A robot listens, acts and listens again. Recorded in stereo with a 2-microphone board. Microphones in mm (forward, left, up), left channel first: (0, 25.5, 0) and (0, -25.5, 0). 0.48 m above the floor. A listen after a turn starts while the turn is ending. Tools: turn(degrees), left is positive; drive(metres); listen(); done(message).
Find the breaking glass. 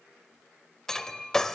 turn(degrees=30)
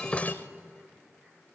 listen()
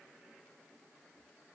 done("I heard breaking glass, but can't make it out now. It was about 20° right or 140° left.")